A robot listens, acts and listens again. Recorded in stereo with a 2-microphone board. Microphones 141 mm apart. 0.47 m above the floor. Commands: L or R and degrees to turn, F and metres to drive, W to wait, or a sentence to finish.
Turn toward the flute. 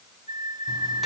R35
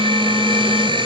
W
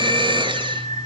R105
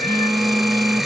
W
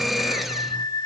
L35
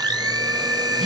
Found it: a flute, straight ahead.